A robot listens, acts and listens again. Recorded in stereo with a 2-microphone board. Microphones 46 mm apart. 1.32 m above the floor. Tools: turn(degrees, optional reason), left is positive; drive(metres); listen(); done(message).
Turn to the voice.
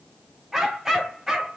listen()
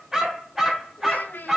turn(degrees=40, reason="The child speaking: about 40° left or 140° left.")
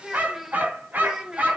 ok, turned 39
turn(degrees=-15, reason="So it is at 15° right.")
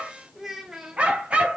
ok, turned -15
turn(degrees=-15, reason="The child speaking is now 15° right.")
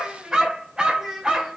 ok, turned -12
done("Facing the child speaking.")